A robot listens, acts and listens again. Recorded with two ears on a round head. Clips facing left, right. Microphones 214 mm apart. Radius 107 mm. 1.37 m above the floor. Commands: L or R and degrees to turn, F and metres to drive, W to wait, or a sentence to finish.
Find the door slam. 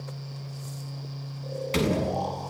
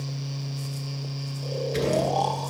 L90
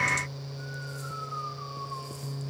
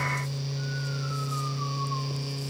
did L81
L10
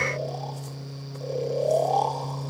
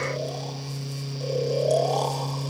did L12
I heard a door slam from this way, but can't make it out now.